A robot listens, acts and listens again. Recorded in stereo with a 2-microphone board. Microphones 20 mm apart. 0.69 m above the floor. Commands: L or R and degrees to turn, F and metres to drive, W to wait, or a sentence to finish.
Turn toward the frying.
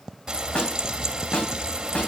R30
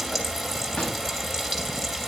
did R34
Facing the frying.